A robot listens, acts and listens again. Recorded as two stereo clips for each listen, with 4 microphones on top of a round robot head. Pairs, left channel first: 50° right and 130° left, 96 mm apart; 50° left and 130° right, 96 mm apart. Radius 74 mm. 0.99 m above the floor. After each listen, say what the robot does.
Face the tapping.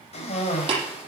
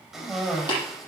Turn 95° left.
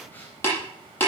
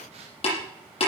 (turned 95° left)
Turn 20° left.
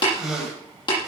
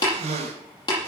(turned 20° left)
Found it: tapping, straight ahead.